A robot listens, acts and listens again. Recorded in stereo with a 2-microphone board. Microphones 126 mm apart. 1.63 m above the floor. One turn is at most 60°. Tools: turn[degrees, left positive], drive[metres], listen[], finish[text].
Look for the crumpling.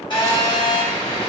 Action: listen[]
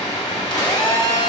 Action: listen[]
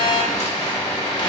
Action: finish[I can't make out crumpling to turn to.]